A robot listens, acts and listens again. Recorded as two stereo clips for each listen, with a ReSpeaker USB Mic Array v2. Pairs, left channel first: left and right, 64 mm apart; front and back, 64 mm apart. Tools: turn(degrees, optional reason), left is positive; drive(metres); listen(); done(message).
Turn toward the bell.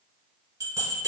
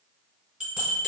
turn(degrees=-110, reason="The bell: 110° right.")
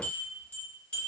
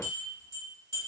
turn(degrees=20, reason="The bell is now 20° left.")
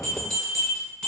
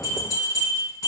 done("Found it: a bell, straight ahead.")